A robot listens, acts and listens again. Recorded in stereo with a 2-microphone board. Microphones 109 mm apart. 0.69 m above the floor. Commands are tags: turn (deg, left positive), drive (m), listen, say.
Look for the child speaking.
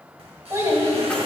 <turn deg="-30"/>
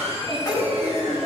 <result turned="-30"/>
<turn deg="-10"/>
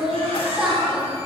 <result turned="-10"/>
<turn deg="-10"/>
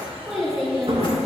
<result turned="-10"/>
<say>Found it: a child speaking, straight ahead, over 4 m away.</say>